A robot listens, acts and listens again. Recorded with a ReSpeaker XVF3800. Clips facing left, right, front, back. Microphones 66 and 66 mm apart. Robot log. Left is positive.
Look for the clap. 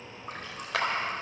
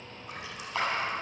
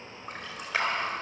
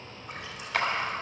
note: The clap: 75° left.
cmd yaw +75
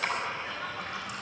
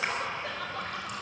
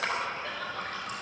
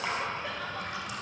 note: The clap is now 20° right.
cmd yaw -20
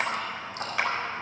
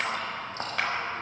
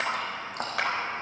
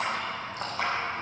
end: Facing the clap, over 4 m away.